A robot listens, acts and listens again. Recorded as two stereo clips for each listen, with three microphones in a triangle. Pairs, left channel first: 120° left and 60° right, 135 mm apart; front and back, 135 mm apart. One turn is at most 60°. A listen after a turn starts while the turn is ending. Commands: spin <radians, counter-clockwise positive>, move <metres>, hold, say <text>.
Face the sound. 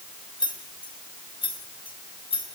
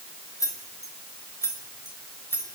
spin 1.05
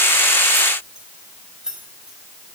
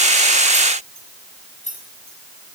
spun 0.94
spin 0.44
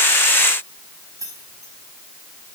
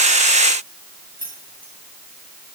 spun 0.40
spin 0.17
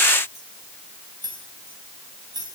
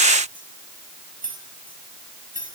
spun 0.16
say Found it: keys jangling, straight ahead.